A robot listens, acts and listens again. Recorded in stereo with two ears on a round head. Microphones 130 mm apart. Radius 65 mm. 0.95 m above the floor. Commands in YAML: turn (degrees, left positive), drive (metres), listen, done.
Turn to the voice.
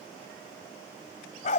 listen: true
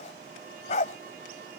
listen: true
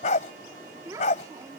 turn: -25
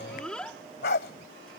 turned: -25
done: "Facing the child speaking."